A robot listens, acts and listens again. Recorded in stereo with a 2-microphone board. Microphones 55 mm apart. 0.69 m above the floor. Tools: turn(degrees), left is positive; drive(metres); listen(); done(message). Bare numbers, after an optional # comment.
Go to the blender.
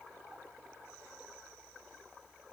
listen()
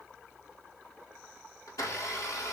turn(90)
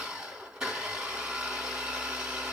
# So it is at 15° right.
turn(-15)
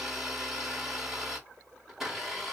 # The blender is now 10° right.
turn(-10)
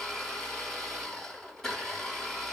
drive(1.0)
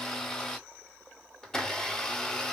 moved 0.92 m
# The blender is now 10° left.
turn(10)
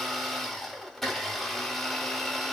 drive(1.0)
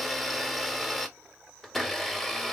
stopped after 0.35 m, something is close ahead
done("I am next to the blender.")